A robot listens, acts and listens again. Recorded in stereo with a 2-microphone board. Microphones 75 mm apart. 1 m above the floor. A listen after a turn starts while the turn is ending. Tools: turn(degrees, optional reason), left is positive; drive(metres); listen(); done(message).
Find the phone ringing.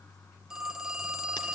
turn(degrees=-30)
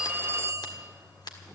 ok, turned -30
turn(degrees=-140, reason="So it is at 140° right.")
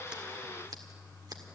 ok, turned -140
listen()
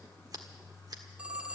turn(degrees=-15, reason="The phone ringing is now 15° right.")
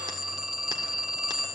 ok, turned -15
done("Found it: a phone ringing, straight ahead.")